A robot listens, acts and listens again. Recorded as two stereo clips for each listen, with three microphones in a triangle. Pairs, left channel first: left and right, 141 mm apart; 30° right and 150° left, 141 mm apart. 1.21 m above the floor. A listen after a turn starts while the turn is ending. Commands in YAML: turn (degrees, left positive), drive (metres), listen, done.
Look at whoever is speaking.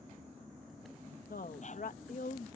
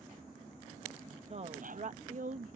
turn: 120
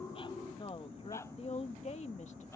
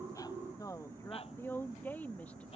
turn: 50
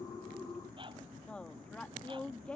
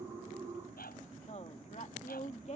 done: "Facing the woman speaking."